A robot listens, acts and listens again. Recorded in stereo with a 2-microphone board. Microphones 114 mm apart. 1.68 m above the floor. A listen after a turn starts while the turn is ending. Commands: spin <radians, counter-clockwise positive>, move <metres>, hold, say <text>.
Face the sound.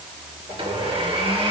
spin -0.96
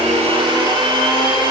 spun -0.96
spin -0.96
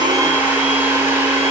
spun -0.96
spin -0.35
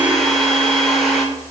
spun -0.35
say Found it: a blender, straight ahead.